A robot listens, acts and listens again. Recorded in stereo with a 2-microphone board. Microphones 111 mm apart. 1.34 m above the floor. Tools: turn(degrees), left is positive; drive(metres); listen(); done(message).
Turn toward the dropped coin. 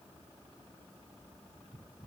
listen()
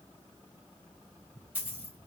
turn(degrees=-15)
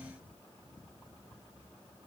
listen()
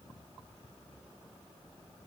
done("I heard a dropped coin, but can't make it out now. It was about straight ahead or 150° right.")